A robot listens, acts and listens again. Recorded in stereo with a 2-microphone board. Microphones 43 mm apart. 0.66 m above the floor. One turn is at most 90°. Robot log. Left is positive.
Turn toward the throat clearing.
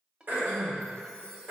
note: The throat clearing: about 55° right or 125° right.
cmd yaw -55
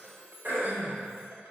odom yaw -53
note: So it is at 65° right.
cmd yaw -65
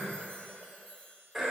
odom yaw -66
end: Found it: throat clearing, straight ahead, 2 to 4 m away.